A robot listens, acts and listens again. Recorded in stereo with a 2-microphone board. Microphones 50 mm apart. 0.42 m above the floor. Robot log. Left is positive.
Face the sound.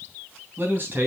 note: The man speaking: about 40° right or 140° right.
cmd yaw -40
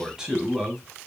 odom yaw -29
note: So it is at 10° right.
cmd yaw -10
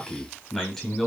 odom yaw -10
end: Found it: a man speaking, straight ahead, 2 to 4 m away.